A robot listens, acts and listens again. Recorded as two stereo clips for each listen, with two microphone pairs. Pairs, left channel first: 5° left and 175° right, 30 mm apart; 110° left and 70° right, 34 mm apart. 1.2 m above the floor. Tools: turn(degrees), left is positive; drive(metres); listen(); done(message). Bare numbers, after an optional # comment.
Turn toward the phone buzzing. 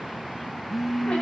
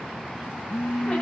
# The phone buzzing: 95° left.
turn(95)
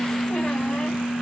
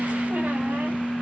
done("Found it: a phone buzzing, straight ahead, under 1 m away.")